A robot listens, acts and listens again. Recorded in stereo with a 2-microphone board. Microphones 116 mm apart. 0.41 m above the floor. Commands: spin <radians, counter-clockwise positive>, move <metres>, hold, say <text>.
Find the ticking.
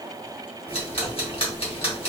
spin 0.96
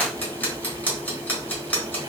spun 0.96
spin 0.26
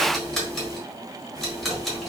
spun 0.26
say Facing the ticking, 1 to 2 m away.